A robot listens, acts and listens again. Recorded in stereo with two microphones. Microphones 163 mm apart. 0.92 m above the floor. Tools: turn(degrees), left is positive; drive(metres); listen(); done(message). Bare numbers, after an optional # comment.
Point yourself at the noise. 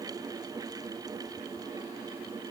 listen()
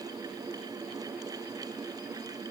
listen()
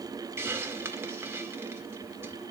turn(-30)
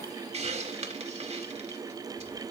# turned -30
# So it is at 140° right.
turn(-140)
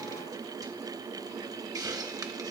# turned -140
# The hiss is now 25° right.
turn(-25)
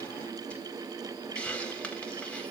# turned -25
done("Facing the hiss, 1 to 2 m away.")